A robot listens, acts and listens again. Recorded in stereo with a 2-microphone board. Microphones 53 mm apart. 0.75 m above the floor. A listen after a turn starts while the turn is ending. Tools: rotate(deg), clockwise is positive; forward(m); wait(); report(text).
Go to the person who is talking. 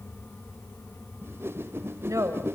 rotate(90)
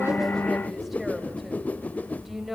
forward(1.0)
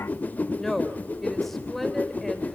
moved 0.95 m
forward(1.0)
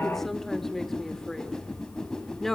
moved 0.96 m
rotate(-10)
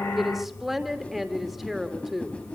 forward(1.0)
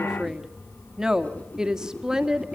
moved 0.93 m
rotate(10)
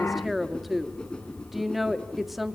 forward(1.0)
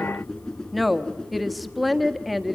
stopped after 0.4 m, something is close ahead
report("Arrived at the woman speaking, straight ahead.")